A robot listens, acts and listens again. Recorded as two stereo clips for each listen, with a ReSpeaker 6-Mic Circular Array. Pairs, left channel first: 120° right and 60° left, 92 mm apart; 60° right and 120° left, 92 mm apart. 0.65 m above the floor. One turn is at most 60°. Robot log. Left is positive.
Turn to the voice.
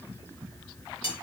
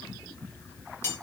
cmd idle
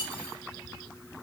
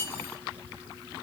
cmd idle
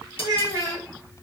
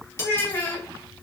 end: Found it: a child speaking, straight ahead.